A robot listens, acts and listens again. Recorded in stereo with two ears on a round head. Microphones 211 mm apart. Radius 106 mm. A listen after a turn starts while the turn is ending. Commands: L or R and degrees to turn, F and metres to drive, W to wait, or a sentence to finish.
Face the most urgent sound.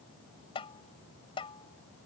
W
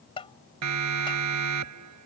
R90
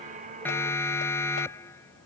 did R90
L10
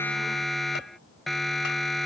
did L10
Found it: a siren, straight ahead.